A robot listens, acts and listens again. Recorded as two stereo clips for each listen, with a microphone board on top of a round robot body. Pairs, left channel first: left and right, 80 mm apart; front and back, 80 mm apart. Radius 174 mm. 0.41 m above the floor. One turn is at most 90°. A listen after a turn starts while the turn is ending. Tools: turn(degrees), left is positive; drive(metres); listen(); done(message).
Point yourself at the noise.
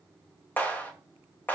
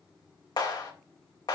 turn(degrees=20)
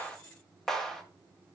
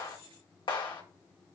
done("Found it: a clap, straight ahead, 2 to 4 m away.")